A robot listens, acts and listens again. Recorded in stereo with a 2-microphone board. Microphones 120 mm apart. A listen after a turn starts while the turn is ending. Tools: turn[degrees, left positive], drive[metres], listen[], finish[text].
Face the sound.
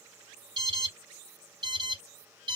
Thought: The alarm: about 35° right or 145° right.
Action: turn[-35]
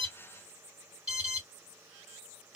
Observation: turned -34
Thought: So it is at 10° right.
Action: turn[-10]
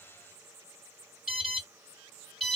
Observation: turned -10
Action: finish[Facing the alarm.]